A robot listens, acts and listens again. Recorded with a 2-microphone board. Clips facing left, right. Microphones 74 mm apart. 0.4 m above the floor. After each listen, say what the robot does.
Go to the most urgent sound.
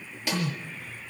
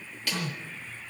Turn 70° left.
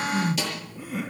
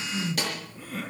Drive 1.0 m forward.
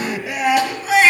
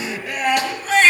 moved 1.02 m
Drive 1.0 m forward.
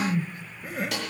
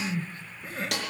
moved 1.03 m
Drive 1.0 m forward.
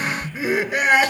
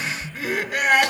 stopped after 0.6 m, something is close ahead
Turn 10° left.
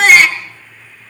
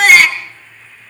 I am next to the crying.